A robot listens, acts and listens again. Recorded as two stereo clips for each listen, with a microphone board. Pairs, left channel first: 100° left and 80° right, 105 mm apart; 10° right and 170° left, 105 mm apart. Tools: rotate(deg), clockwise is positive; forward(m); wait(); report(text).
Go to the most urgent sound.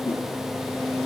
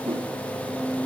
wait()
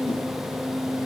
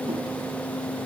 wait()
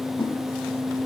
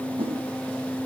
report("I can't make out anything urgent to turn to.")